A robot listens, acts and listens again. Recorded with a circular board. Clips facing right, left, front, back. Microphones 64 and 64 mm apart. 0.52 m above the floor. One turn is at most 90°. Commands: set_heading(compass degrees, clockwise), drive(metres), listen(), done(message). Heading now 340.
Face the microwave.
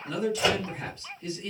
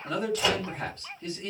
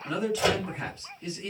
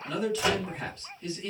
set_heading(0)
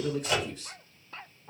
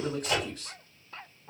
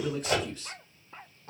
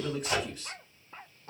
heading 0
done("Found it: a microwave, straight ahead, 1 to 2 m away.")